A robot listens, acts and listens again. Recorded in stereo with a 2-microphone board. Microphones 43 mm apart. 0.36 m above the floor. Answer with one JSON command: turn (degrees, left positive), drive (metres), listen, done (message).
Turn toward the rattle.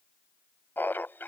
{"listen": true}
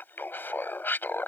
{"listen": true}
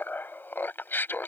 {"done": "I can't make out a rattle, only laughter."}